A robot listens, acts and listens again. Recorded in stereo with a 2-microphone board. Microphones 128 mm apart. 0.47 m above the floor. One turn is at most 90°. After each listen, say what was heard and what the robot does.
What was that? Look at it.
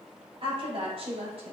The woman speaking: about 50° right or 130° right. Turn 50° right.
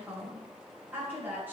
So it is at 15° right. Turn 15° right.
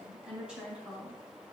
The woman speaking is now 10° right. Turn 10° right.
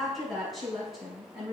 Facing the woman speaking.